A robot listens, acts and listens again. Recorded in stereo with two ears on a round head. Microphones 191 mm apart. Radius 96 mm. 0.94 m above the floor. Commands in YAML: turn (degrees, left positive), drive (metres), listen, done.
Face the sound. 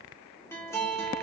turn: 30
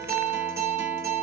turn: -15
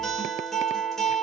done: "Facing the guitar."